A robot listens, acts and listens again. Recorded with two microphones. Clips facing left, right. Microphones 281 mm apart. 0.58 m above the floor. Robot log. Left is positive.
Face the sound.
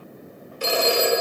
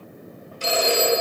note: The phone ringing: about 65° left or 115° left.
cmd yaw +65
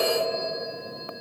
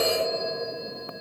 note: So it is at 45° left.
cmd yaw +45
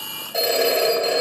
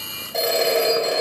end: Facing the phone ringing.